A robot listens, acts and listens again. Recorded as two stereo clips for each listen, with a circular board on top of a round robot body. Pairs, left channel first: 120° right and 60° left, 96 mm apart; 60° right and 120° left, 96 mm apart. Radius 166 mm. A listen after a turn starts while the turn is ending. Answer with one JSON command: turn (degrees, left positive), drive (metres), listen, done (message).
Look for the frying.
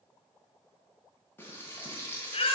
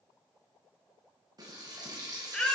{"turn": 170}
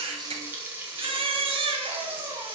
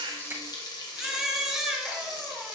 {"turn": -10}
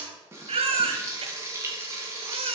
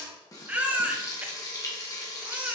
{"done": "Facing the frying."}